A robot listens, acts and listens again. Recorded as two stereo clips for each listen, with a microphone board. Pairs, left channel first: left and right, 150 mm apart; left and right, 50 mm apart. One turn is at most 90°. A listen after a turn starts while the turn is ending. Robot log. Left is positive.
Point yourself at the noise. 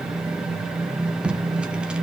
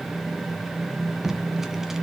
cmd yaw -30
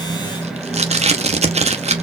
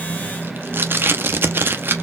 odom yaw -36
note: So it is at 135° right.
cmd yaw -90
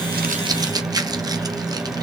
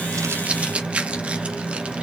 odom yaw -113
note: The tape being pulled is now 25° right.
cmd yaw -25
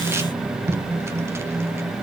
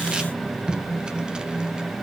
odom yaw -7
note: The tape being pulled is now 15° right.
cmd yaw -15
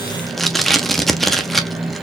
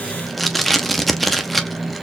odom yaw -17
end: Facing the tape being pulled, under 1 m away.